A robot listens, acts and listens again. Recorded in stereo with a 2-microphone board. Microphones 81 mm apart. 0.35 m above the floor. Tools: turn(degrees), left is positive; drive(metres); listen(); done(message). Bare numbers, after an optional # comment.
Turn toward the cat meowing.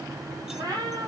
# The cat meowing: about 50° right or 130° right.
turn(-50)
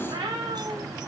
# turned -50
# So it is at 80° right.
turn(-80)
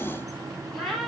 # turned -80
done("Facing the cat meowing, over 4 m away.")